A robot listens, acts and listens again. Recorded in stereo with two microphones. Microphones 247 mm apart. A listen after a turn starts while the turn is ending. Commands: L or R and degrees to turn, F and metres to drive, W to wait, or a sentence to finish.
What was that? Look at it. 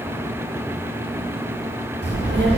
R50
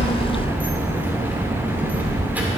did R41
Facing the child speaking, 1 to 2 m away.